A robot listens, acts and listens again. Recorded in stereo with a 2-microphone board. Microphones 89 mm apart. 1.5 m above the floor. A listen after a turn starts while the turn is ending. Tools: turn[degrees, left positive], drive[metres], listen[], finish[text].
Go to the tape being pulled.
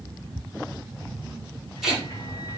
Action: turn[-30]
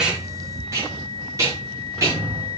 Thought: So it is at 145° right.
Action: turn[-145]
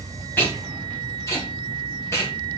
Thought: The tape being pulled is now 30° left.
Action: turn[30]
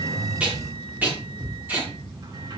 Thought: The tape being pulled is now 20° right.
Action: turn[-20]
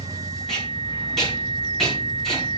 Action: drive[1.0]
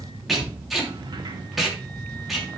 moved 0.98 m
Action: drive[1.0]
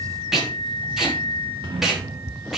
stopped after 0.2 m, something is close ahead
Action: finish[Blocked. The tape being pulled is further on, straight ahead.]